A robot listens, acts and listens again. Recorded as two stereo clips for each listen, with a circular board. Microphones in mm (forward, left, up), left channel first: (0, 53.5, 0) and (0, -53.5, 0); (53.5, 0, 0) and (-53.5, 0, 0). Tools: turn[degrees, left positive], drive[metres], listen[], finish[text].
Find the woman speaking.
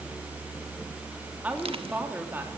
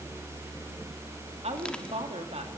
Thought: The woman speaking: 160° right.
Action: turn[-160]
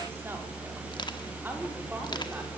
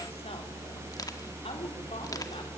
Thought: The woman speaking is now 20° right.
Action: turn[-20]
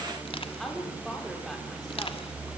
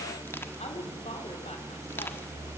Action: finish[Facing the woman speaking, over 4 m away.]